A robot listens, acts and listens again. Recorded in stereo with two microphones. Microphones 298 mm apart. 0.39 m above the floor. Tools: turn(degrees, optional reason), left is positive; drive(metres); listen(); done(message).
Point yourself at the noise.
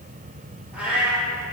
turn(degrees=-30)
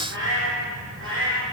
turn(degrees=-135, reason="So it is at 135° right.")
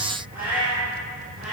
done("Facing the cat meowing.")